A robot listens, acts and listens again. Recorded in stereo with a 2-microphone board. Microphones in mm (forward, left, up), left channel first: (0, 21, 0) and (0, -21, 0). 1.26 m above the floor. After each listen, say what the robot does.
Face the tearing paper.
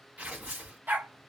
Turn 35° right.
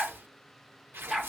Turn 105° right.
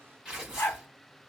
Turn 15° right.
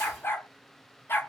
Keep listening.
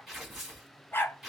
Found it: tearing paper, straight ahead, 2 to 4 m away.